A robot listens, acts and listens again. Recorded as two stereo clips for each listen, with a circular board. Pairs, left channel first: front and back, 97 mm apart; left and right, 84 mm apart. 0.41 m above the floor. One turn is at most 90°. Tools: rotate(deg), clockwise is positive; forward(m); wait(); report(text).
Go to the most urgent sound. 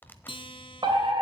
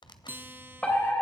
rotate(-90)
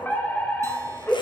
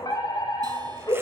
rotate(-65)
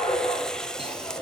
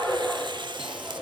rotate(-15)
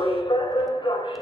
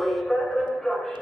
forward(1.0)
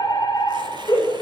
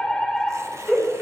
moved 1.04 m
forward(1.0)
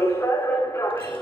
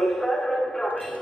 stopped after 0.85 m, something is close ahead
report("Arrived at the fire alarm, straight ahead.")